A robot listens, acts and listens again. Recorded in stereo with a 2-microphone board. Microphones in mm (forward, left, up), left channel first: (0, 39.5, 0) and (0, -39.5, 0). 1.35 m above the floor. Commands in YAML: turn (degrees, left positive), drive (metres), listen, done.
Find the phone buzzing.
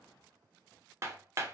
listen: true
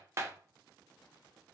listen: true
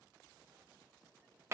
done: "I can't make out a phone buzzing, only hammering."